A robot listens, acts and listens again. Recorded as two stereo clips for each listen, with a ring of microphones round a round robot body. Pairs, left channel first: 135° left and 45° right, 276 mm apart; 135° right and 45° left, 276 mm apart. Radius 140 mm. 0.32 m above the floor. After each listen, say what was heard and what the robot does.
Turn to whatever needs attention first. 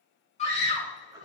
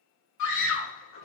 The scream: 160° right. Turn 160° right.
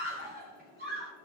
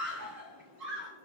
The scream is now 15° left. Turn 15° left.
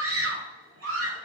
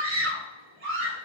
Found it: a scream, straight ahead, over 4 m away.